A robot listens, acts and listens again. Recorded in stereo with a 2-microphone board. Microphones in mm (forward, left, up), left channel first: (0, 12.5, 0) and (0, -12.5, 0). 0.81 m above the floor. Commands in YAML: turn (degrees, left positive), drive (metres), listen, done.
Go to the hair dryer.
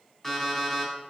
listen: true
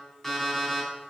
listen: true
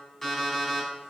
done: "I can't make out a hair dryer, only an alarm clock."